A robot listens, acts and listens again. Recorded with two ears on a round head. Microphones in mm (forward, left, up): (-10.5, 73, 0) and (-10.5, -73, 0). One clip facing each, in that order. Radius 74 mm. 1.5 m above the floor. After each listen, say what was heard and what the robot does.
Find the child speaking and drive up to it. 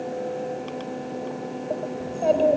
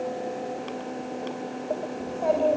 The child speaking: about 30° left or 150° left. Turn 30° left.
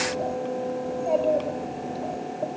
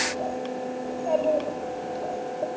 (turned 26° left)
Drive 1.0 m forward.
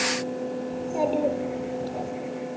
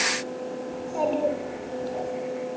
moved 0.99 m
The child speaking is now 10° left. Turn 10° left.
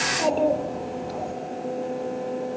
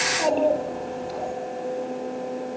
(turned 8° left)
Drive 1.0 m forward.
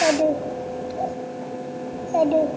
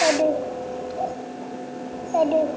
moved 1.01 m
Drive 1.0 m forward.
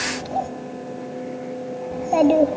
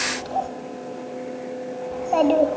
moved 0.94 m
The child speaking is now 10° left. Turn 10° left.
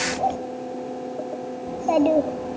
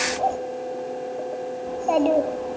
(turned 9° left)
Drive 1.0 m forward.
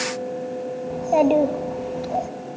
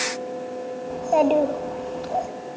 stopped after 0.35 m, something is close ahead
I am next to the child speaking.